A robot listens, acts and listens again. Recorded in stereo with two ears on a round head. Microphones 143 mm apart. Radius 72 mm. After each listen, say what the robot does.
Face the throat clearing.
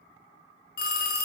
Keep listening.
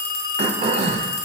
Turn 40° right.
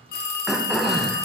Facing the throat clearing.